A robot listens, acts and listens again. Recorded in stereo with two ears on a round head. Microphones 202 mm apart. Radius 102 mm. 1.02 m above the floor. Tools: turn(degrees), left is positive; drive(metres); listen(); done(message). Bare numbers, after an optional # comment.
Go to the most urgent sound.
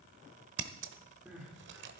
turn(-30)
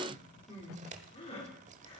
# So it is at 25° left.
turn(25)
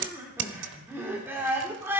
# The crying is now 10° right.
turn(-10)
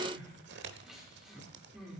drive(1.0)
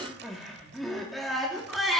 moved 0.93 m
drive(1.0)
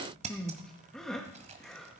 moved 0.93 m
drive(1.0)
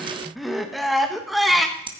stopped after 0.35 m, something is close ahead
done("I am next to the crying.")